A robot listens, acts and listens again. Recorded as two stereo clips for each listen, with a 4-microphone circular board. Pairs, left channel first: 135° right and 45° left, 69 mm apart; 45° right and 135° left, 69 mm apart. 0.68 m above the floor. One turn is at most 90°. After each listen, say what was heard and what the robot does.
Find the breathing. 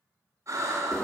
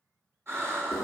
The breathing: 85° left. Turn 85° left.
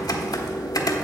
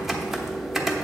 Keep listening.
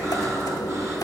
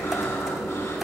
Keep listening.
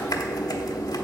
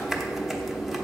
I heard breathing from this way, but can't make it out now.